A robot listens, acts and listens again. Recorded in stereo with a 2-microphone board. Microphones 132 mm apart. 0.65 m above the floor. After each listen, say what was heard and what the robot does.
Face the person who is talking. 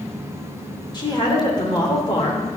The woman speaking: about 35° left or 145° left. Turn 35° left.
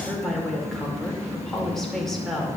Found it: a woman speaking, straight ahead, 2 to 4 m away.